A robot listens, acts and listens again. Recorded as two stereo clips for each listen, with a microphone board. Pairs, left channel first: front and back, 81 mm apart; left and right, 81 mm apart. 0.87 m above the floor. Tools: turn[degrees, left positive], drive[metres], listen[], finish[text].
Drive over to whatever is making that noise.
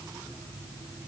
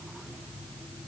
Action: listen[]
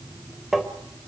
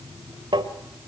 Thought: The tapping: 95° right.
Action: turn[-95]
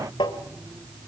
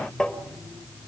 Thought: The tapping is now 10° left.
Action: turn[10]
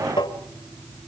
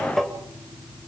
Action: drive[1.0]
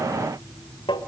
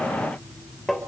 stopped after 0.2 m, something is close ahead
Action: finish[Blocked. The tapping is further on, straight ahead.]